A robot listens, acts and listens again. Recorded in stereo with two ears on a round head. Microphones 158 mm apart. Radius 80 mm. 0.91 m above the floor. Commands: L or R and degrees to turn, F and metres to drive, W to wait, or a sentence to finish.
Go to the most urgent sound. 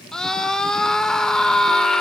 L30
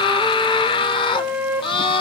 L150
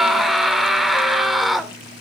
F1.0
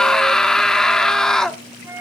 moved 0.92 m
F1.0
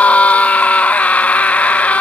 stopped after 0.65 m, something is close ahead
L10
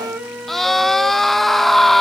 Arrived at the scream, straight ahead.